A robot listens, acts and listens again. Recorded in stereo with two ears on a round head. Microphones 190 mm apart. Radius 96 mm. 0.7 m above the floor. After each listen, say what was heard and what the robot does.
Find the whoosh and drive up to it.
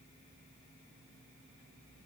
Keep listening.
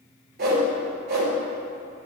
The whoosh: about 50° right or 130° right. Turn 50° right.
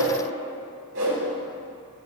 So it is at 75° right. Turn 75° right.
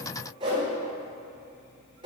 The whoosh is now 30° right. Turn 30° right.
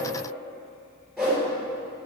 Drive 1.0 m forward.
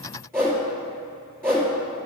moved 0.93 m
The whoosh is now 15° right. Turn 15° right.
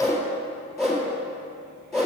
Drive 1.0 m forward.
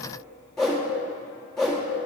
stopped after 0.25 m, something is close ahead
Arrived at the whoosh, straight ahead.